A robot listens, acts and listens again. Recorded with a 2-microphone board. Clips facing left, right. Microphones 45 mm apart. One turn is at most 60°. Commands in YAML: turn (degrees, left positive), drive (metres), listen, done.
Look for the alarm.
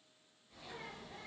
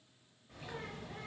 listen: true
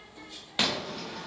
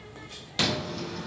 turn: 20
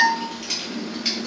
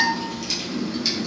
turn: 60
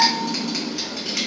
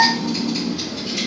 turn: 60
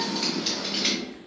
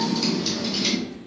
turn: 25
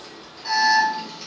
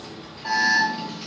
turn: -20
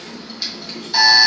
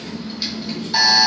done: "Facing the alarm."